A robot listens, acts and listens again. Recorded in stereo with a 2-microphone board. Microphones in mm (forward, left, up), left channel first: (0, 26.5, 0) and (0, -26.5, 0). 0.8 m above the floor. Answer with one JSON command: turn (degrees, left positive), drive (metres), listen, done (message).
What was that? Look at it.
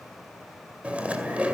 {"turn": -25}
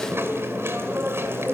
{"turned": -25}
{"turn": -130}
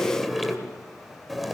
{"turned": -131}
{"done": "Facing the chewing, 2 to 4 m away."}